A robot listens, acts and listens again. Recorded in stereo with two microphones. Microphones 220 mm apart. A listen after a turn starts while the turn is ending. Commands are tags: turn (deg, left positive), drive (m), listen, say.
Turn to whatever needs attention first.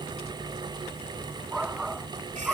<turn deg="-30"/>
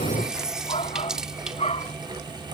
<turn deg="25"/>
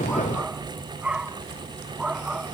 <say>Facing the shout.</say>